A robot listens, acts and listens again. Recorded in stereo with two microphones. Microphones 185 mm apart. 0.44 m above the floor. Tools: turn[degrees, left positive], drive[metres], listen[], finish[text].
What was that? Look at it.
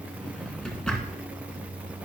Action: turn[30]
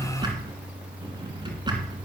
Thought: So it is at 25° right.
Action: turn[-25]
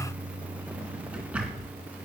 Action: finish[Facing the drawer.]